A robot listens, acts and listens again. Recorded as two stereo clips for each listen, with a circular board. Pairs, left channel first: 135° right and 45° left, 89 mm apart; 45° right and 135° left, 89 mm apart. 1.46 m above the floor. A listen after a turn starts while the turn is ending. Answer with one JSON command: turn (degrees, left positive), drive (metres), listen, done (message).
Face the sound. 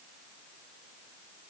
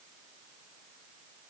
{"listen": true}
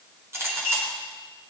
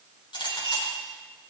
{"turn": -15}
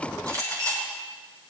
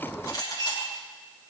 {"done": "Found it: a clink, straight ahead, over 4 m away."}